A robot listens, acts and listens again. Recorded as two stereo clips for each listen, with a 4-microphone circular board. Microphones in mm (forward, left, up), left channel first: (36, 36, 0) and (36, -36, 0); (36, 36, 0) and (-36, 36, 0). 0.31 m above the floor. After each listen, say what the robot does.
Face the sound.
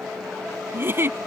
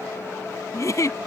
Turn 35° right.
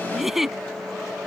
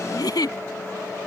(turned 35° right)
Found it: a giggle, straight ahead.